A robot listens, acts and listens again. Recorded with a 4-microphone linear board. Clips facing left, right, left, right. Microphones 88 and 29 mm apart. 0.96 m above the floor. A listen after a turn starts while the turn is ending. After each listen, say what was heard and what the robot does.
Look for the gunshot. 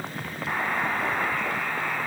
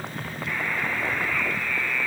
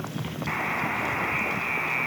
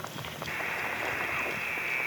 Keep listening.
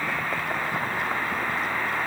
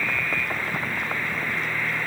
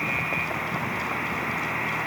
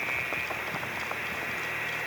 Keep listening.
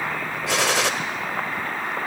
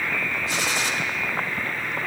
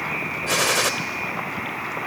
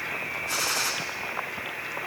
Turn 90° left.
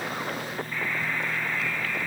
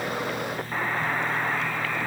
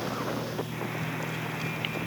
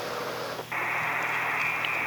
I heard a gunshot from this way, but can't make it out now.